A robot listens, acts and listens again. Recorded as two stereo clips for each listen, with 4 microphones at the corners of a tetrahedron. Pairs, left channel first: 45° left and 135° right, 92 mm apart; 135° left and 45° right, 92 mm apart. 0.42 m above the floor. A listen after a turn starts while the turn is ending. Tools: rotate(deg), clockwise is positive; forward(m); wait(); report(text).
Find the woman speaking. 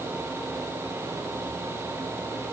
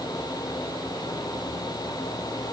wait()
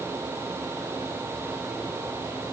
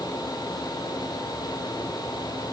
wait()
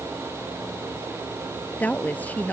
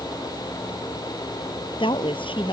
rotate(-120)
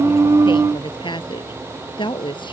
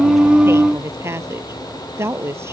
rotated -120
rotate(-15)
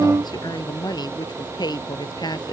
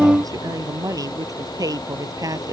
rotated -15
report("Facing the woman speaking.")